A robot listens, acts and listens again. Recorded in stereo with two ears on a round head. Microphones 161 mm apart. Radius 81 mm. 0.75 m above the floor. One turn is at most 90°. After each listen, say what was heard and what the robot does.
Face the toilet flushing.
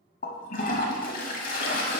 The toilet flushing: about 50° left or 130° left. Turn 50° left.
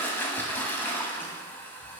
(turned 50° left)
So it is at 15° left. Turn 15° left.
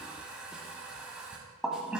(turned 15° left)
Found it: a toilet flushing, straight ahead.